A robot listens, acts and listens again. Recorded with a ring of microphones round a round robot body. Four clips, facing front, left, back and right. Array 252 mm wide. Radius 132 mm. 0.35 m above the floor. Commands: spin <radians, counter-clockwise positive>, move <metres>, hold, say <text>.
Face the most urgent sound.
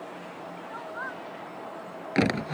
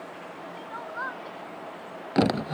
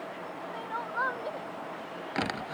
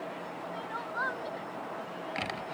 spin -2.97
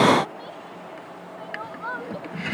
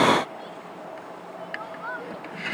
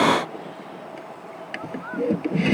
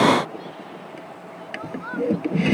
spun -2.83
spin -0.17
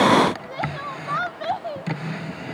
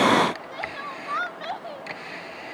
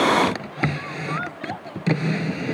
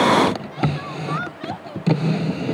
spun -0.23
say Facing the crying.